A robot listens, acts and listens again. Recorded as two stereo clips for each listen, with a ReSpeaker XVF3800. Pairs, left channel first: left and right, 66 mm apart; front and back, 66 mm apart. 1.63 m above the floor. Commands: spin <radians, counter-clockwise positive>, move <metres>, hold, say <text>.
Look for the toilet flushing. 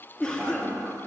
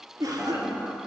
spin -2.18
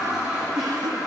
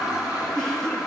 spin -0.17
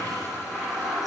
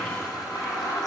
say Facing the toilet flushing.